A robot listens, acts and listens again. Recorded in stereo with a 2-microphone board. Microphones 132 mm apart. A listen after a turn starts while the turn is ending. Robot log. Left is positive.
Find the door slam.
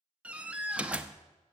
cmd yaw -30
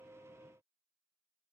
cmd idle
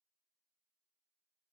end: I heard a door slam, but can't make it out now. It was about 20° left or 140° right.